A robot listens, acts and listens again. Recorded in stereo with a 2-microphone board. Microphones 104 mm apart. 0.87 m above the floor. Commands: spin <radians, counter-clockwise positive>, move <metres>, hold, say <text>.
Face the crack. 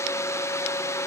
hold
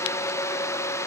hold
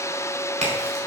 spin -1.57
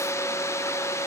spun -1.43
spin -0.17
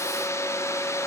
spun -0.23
say Facing where the crack came from. I can't hear it now.